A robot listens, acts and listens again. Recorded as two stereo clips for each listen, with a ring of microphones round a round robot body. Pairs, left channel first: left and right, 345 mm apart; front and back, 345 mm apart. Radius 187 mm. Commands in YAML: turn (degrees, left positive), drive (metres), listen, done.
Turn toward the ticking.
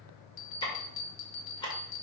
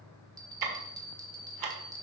turn: 165
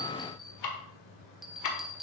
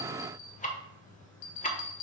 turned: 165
turn: 65
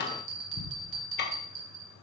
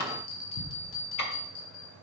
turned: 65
turn: 30
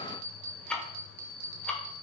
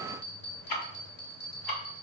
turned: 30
done: "Facing the ticking, 1 to 2 m away."